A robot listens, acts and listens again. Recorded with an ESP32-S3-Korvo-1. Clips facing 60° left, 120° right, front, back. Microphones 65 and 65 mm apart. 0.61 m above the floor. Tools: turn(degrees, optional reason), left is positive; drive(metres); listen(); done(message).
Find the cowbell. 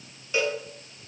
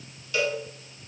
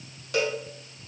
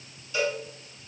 done("Facing the cowbell.")